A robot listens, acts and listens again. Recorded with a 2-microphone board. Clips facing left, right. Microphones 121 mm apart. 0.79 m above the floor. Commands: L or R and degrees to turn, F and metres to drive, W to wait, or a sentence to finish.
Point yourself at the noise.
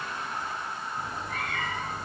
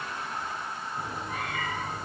R30
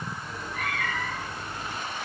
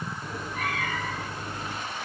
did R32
R135
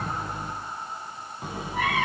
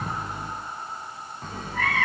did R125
L15
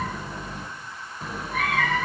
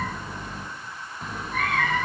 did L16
Found it: a cat meowing, straight ahead, 1 to 2 m away.